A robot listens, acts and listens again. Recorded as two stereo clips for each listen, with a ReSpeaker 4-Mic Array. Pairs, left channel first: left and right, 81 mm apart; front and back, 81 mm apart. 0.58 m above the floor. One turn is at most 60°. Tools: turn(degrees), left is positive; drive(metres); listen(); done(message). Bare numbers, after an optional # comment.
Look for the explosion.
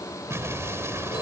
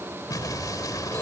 # The explosion: 35° right.
turn(-35)
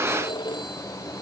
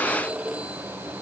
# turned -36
done("I heard an explosion from this way, but can't make it out now.")